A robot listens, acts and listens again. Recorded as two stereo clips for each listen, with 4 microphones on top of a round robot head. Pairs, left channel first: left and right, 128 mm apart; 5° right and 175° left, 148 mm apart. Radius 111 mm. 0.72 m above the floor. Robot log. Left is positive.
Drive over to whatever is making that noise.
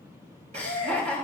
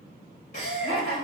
note: The laughter: 50° right.
cmd yaw -50
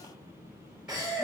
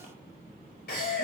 cmd fwd 1.0
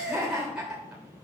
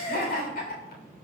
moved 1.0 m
cmd fwd 1.0
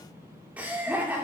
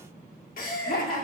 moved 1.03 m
note: The laughter is now 10° right.
cmd yaw -10
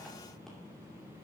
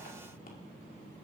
cmd idle
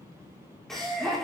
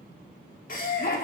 cmd fwd 1.0
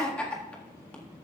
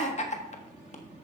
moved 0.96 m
note: The laughter is now 10° left.
cmd yaw +10
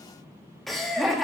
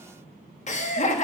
cmd fwd 1.0
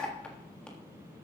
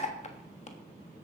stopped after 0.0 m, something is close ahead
note: The laughter is now 10° left.
cmd yaw +10
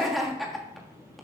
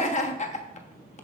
end: I am next to the laughter.